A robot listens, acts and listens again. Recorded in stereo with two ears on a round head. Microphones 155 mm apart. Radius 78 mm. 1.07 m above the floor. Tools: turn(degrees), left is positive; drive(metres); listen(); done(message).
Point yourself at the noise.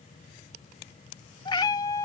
turn(degrees=20)
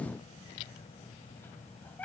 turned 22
turn(degrees=30)
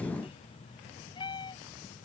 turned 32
turn(degrees=25)
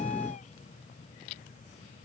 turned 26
listen()
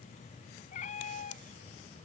turn(degrees=135)
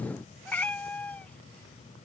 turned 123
turn(degrees=10)
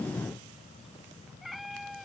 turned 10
done("Facing the cat meowing.")